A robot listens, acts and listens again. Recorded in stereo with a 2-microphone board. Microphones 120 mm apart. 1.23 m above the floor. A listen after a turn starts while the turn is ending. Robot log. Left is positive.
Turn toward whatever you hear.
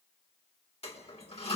note: The toilet flushing: about 60° left or 120° left.
cmd yaw +60
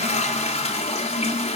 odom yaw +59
note: So it is at 60° left.
cmd yaw +60
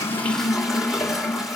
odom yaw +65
end: Facing the toilet flushing, 2 to 4 m away.